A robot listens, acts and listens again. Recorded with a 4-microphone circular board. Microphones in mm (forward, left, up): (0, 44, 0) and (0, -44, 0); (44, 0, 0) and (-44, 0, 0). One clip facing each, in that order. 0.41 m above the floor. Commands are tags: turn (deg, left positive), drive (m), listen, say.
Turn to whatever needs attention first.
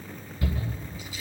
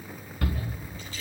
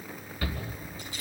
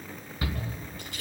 <turn deg="-110"/>
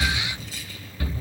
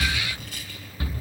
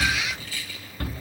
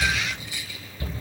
<turn deg="-25"/>
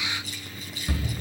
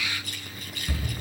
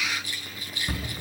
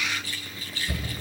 <turn deg="15"/>
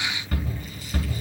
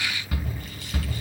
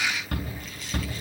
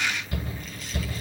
<say>Facing the shout.</say>